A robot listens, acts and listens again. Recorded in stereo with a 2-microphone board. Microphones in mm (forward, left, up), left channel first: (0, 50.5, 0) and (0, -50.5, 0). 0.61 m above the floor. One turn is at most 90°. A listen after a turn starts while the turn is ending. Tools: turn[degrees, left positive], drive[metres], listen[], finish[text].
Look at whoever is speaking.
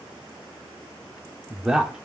Action: turn[-30]
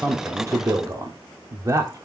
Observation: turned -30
Thought: So it is at 140° right.
Action: turn[-90]
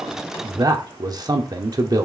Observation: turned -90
Thought: The man speaking is now 50° right.
Action: turn[-50]
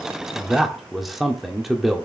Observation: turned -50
Action: finish[Facing the man speaking.]